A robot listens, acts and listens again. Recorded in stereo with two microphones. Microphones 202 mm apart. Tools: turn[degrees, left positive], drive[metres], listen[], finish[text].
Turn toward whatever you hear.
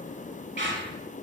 Thought: The squeak: about 60° right or 120° right.
Action: turn[-60]
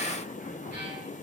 Action: listen[]
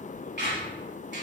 Thought: So it is at 55° right.
Action: turn[-55]
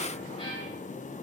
Action: listen[]
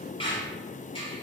Thought: The squeak is now 25° left.
Action: turn[25]
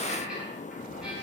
Action: finish[Facing the squeak, 1 to 2 m away.]